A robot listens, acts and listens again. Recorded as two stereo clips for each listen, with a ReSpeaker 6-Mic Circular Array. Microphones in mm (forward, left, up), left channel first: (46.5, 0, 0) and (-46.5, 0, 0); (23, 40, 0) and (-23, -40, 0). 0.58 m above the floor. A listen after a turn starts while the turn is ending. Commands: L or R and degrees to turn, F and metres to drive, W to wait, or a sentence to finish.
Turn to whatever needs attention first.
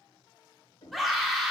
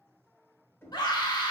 L90
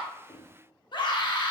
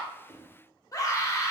L15
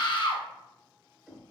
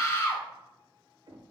Found it: a scream, straight ahead, 1 to 2 m away.